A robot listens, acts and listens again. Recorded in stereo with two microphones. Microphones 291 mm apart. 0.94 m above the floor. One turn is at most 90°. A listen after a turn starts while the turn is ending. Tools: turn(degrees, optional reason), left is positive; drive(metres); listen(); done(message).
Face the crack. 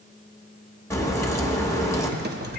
turn(degrees=30)
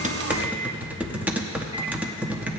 listen()
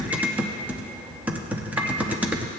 done("I heard a crack, but can't make it out now. It was about 20° right or 140° left.")